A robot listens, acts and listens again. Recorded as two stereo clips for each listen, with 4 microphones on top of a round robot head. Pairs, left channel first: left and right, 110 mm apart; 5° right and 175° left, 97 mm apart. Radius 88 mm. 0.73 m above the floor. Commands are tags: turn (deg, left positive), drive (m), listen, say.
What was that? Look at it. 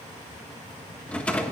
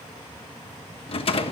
<turn deg="10"/>
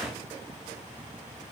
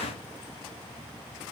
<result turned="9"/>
<listen/>
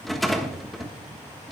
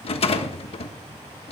<say>Facing the rattle.</say>